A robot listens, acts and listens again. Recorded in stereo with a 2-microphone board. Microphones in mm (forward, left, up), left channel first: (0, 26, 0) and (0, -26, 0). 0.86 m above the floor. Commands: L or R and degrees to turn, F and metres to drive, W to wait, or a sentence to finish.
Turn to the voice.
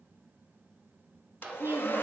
R60
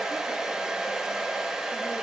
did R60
W
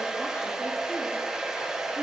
W
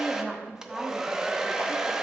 R10
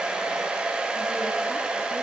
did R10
W
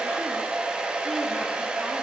W
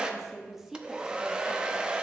Found it: a woman speaking, straight ahead, 1 to 2 m away.